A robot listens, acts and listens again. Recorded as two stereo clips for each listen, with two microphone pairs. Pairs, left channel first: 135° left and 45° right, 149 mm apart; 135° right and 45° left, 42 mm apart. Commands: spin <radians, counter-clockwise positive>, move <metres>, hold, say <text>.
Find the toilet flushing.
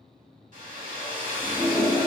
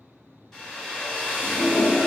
spin -2.53
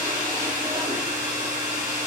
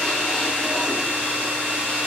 hold
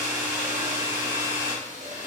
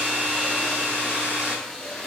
spin -0.96
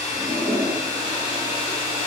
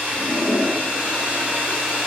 say Facing the toilet flushing, under 1 m away.